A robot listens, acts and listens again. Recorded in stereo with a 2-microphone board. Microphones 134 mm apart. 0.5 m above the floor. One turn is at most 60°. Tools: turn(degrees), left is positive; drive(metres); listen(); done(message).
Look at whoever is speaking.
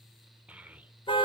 turn(degrees=-30)
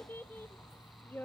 turn(degrees=20)
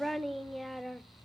done("Found it: a child speaking, straight ahead.")